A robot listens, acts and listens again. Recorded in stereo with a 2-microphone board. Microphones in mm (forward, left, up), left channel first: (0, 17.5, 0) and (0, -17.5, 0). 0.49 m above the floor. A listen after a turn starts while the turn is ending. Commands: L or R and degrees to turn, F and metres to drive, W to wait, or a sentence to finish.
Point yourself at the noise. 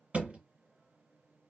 R35
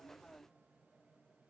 W
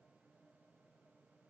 I heard a thud, but can't make it out now. It was about straight ahead or 110° right.